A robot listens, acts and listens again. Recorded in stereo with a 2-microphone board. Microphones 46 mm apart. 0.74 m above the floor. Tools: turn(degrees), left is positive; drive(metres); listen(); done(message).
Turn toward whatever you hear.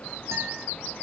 listen()
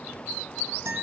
turn(degrees=-90)
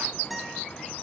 done("Found it: a guitar, straight ahead, over 4 m away.")